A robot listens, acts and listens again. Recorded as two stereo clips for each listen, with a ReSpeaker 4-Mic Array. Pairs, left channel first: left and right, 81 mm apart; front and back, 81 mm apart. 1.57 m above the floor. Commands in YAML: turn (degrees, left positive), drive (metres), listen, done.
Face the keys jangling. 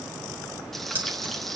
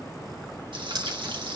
turn: -155
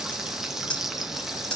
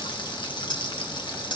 turn: 10
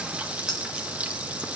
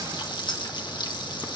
done: "Facing the keys jangling."